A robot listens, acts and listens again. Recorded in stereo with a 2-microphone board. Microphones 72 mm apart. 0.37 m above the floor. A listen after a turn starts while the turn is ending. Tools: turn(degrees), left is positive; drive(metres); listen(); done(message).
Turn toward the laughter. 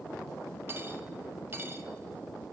listen()
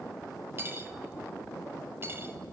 listen()
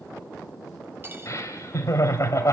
turn(degrees=45)
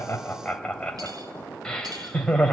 turn(degrees=15)
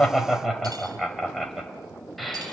done("Found it: laughter, straight ahead, 1 to 2 m away.")